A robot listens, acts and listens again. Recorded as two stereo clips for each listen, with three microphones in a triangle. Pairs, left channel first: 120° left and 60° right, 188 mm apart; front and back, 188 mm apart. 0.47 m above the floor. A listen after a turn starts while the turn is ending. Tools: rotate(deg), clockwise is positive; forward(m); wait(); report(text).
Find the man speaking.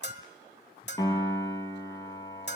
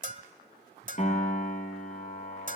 wait()
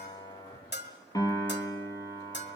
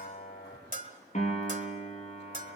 wait()
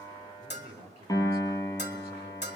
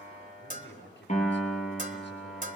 report("Facing the man speaking, over 4 m away.")